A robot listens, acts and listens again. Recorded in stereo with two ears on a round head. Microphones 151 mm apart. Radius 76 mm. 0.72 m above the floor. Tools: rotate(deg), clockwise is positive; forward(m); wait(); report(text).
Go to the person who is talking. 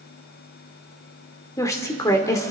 rotate(-20)
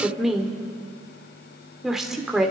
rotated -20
forward(1.0)
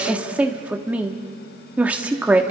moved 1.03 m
rotate(10)
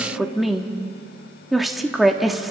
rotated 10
forward(1.0)
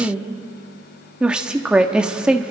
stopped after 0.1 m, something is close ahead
report("Arrived at the woman speaking, straight ahead.")